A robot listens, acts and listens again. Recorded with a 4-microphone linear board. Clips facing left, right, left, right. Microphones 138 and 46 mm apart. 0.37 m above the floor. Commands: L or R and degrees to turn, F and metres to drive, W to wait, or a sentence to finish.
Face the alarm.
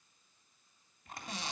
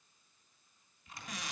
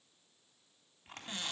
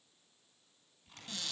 W
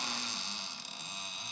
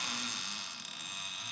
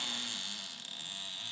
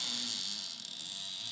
W
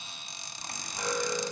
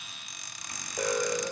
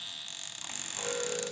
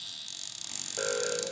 R60
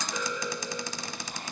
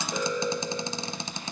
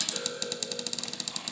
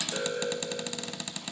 R45
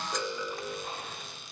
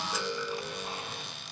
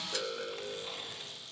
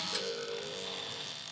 L20
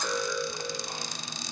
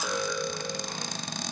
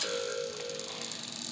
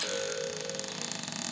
Found it: an alarm, straight ahead.